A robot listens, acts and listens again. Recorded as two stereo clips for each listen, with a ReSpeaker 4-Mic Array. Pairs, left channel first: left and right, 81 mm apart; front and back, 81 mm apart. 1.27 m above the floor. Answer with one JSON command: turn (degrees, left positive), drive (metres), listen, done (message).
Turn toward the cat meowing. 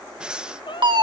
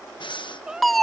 {"turn": 100}
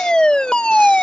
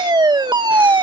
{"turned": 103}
{"listen": true}
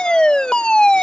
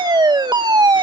{"listen": true}
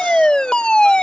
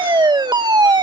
{"done": "I heard a cat meowing from this way, but can't make it out now."}